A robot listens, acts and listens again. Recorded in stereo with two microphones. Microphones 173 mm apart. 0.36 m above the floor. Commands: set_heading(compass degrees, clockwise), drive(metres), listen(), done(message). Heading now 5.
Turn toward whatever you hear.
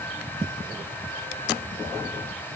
listen()
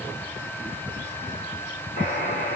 set_heading(325)
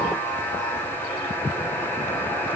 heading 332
set_heading(322)
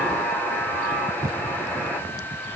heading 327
done("Facing the buzzer.")